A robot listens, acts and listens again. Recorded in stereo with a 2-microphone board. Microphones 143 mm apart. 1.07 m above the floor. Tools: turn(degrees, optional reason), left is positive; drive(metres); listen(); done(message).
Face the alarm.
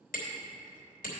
listen()
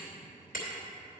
listen()
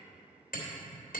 done("I can't make out an alarm, only hammering.")